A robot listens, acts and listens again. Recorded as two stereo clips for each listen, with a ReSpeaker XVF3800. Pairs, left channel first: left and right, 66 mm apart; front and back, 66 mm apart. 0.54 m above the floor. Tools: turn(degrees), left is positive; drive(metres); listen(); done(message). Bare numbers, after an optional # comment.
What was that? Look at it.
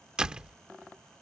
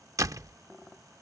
# The door slam: 165° right.
turn(-165)
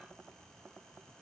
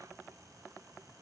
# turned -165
done("I heard a door slam from this way, but can't make it out now.")